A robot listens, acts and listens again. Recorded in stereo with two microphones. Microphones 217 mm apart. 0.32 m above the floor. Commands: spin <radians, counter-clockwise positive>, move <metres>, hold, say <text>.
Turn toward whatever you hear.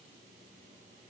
hold
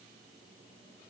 hold
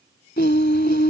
spin 0.87
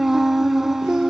say Facing the singing.